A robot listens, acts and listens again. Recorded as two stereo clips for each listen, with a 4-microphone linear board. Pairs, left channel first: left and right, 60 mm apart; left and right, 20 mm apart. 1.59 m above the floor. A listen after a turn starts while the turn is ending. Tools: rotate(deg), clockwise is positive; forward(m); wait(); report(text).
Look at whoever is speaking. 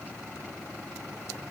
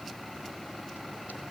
wait()
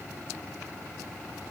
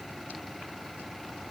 wait()
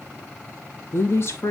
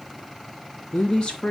rotate(-45)
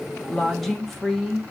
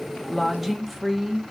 report("Found it: a woman speaking, straight ahead, 1 to 2 m away.")